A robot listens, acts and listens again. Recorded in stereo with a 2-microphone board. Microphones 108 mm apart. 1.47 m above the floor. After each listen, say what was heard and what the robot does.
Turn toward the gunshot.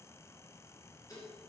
Keep listening.
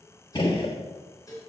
The gunshot: about 50° left or 130° left. Turn 50° left.
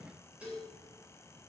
Keep listening.
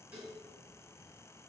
I heard a gunshot, but can't make it out now. It was about straight ahead or 80° left.